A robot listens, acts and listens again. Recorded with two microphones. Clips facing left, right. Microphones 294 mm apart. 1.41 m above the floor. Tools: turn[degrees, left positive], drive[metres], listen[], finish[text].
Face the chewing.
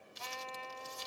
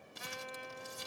Action: listen[]
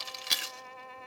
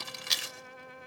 Thought: The chewing: about 65° left or 115° left.
Action: turn[65]
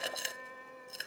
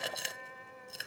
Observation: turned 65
Action: finish[Facing the chewing.]